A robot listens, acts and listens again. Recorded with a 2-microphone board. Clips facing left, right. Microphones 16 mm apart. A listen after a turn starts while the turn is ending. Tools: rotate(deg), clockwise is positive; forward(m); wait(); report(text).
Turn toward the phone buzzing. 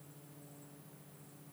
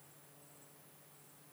wait()
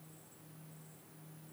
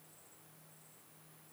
wait()
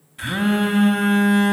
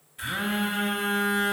rotate(-25)
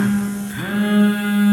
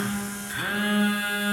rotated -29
report("Facing the phone buzzing.")